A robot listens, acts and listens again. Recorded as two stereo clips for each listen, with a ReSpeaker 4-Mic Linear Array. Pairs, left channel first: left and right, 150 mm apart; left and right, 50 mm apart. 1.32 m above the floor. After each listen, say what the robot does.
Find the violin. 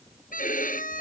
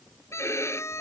Turn 75° left.
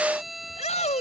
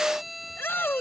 Found it: a violin, straight ahead.